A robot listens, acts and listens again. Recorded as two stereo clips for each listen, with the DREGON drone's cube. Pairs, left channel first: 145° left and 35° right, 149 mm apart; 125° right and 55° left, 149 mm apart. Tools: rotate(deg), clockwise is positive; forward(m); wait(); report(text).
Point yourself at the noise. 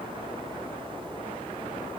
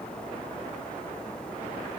wait()
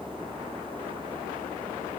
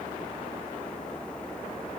wait()
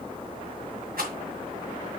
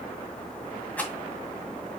rotate(45)
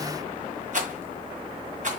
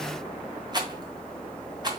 report("Facing the rattle, 2 to 4 m away.")